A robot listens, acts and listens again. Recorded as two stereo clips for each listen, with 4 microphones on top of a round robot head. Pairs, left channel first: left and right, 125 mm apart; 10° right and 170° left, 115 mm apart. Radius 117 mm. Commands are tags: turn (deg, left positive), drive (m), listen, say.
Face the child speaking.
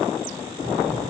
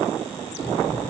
<turn deg="-90"/>
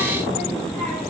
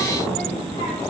<turn deg="-15"/>
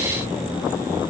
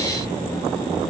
<turn deg="-25"/>
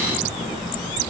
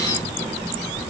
<turn deg="-30"/>
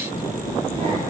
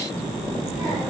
<turn deg="-30"/>
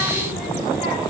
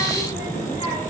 <say>Found it: a child speaking, straight ahead, 1 to 2 m away.</say>